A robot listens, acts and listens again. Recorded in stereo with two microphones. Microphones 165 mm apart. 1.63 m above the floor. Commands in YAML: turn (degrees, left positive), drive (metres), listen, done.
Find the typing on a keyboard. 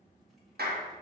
listen: true
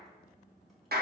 listen: true
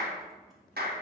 done: "I can't make out typing on a keyboard, only a clap."